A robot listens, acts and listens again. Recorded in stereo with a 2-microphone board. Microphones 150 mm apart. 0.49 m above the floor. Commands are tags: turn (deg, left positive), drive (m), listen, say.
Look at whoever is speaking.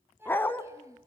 <turn deg="-20"/>
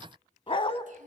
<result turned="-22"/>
<listen/>
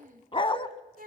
<turn deg="-110"/>
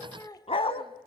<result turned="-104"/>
<turn deg="25"/>
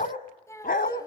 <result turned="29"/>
<turn deg="20"/>
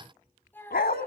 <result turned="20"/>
<turn deg="15"/>
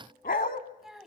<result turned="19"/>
<say>Facing the child speaking, 2 to 4 m away.</say>